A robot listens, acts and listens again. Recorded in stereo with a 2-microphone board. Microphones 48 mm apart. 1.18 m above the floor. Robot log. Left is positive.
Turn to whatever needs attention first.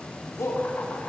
cmd yaw +90
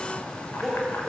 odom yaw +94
end: Facing the shout, over 4 m away.